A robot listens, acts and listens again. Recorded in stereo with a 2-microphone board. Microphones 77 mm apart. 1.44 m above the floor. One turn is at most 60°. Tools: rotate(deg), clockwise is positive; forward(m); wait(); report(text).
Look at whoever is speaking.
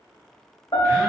wait()
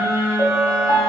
wait()
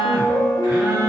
report("I can't make out anyone speaking to turn to.")